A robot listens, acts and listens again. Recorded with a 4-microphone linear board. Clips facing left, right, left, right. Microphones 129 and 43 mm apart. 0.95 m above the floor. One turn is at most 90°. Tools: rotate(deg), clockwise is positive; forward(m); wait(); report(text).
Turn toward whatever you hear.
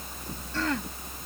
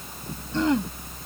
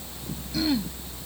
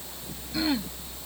rotate(20)
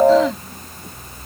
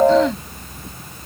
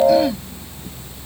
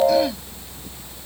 wait()
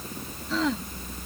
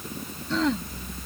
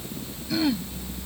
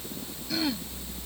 report("Found it: throat clearing, straight ahead.")